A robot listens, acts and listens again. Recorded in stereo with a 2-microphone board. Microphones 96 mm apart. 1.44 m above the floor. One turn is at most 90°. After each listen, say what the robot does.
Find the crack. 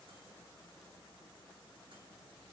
Keep listening.
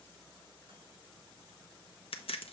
Turn 75° left.
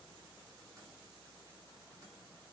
Keep listening.
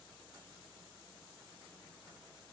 I heard a crack, but can't make it out now. It was about straight ahead or 30° left.